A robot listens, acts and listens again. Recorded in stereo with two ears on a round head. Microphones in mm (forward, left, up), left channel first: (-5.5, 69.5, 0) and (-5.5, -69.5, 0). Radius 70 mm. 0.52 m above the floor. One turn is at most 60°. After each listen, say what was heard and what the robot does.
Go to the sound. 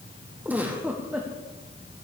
Turn 30° right.
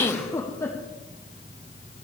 So it is at 20° left. Turn 20° left.
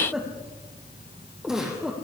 Drive 1.0 m forward.
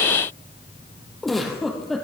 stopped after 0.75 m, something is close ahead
Blocked. The giggle is further on, straight ahead.